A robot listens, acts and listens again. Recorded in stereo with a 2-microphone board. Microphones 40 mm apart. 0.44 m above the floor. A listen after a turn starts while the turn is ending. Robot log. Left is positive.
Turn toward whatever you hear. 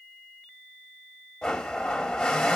cmd yaw +30
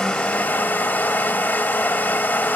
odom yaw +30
note: So it is at 140° left.
cmd yaw +140
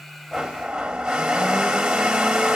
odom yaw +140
note: The blender is now 15° right.
cmd yaw -15
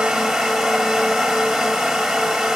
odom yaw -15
end: Found it: a blender, straight ahead.